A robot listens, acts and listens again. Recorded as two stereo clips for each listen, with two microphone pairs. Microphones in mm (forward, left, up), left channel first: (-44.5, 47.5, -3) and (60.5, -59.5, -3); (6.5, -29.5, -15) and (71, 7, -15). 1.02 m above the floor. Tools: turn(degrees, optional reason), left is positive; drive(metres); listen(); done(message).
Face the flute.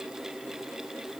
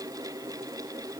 listen()
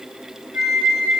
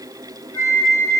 turn(degrees=150, reason="The flute: 150° left.")
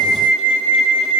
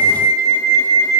turn(degrees=-25, reason="The flute is now 25° right.")
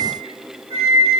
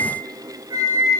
done("Found it: a flute, straight ahead.")